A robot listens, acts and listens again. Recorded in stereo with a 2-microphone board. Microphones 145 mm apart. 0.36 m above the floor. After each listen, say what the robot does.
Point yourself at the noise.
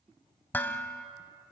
Turn 30° left.
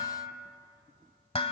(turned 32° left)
Turn 135° left.
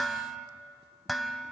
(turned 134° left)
Found it: dishes clattering, straight ahead, 1 to 2 m away.